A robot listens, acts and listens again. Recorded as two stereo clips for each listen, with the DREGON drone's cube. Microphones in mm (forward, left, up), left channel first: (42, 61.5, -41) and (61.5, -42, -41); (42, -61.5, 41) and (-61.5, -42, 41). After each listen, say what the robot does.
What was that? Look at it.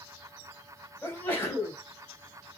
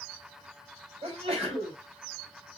Turn 170° left.
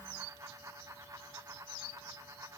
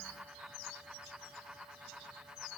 Facing where the sneeze came from. I can't hear it now.